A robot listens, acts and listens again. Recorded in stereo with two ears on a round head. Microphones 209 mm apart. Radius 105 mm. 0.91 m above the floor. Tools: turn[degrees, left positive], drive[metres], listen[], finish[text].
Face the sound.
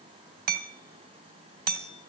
Thought: The hammering: about 45° right or 135° right.
Action: turn[-45]
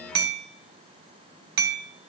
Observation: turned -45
Thought: So it is at 90° right.
Action: turn[-90]
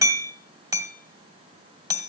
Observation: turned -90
Thought: The hammering is now 15° right.
Action: turn[-15]
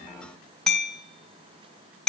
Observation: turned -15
Action: finish[Found it: hammering, straight ahead, 2 to 4 m away.]